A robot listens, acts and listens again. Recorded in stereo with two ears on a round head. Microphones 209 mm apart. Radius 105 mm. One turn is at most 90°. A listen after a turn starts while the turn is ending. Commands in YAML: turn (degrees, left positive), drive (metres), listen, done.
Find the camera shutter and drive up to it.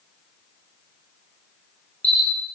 turn: 30
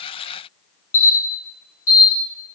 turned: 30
turn: 90
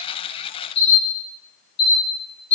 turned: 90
turn: 55
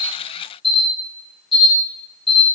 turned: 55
drive: 1.0
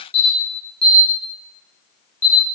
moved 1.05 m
turn: 10
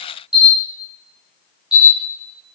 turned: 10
drive: 1.0
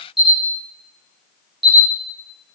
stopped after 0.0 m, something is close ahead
done: "I am next to the camera shutter."